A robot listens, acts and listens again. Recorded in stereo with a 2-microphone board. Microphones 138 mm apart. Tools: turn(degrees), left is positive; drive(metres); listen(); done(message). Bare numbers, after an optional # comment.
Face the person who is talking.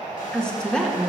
turn(30)
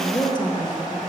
# So it is at 145° left.
turn(145)
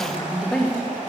done("Found it: a woman speaking, straight ahead, 1 to 2 m away.")